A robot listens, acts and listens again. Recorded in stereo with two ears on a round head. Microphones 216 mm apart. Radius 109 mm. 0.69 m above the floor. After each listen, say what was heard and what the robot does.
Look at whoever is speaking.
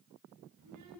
Turn 90° right.
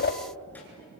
Keep listening.
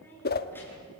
The child speaking is now 10° left. Turn 10° left.
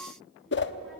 Keep listening.
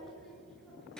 Facing the child speaking.